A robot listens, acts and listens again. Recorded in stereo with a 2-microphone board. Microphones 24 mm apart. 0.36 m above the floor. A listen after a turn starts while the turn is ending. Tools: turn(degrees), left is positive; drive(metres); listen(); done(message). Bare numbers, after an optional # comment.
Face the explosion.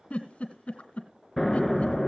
turn(30)
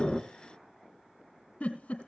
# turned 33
listen()
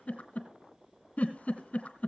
done("I heard an explosion, but can't make it out now. It was about 25° right or 140° left.")